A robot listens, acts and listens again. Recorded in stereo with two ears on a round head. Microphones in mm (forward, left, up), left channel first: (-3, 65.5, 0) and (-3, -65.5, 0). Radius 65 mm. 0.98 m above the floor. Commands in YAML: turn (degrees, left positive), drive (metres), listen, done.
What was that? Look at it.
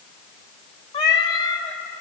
turn: 25
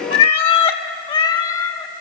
turn: 25
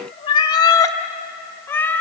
turn: 30
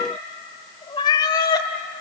turn: 30
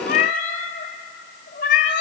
turn: 125
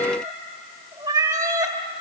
turn: -20
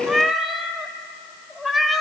done: "Facing the cat meowing, 1 to 2 m away."